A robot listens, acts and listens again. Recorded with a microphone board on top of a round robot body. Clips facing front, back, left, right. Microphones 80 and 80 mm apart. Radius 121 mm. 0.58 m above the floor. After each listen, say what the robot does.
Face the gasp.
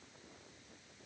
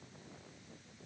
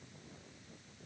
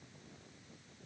Keep listening.
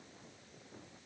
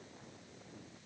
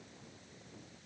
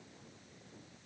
Keep listening.
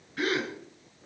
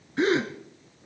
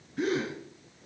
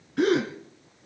Turn 115° right.
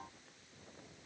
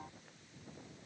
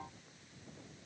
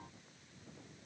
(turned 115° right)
I heard a gasp from this way, but can't make it out now.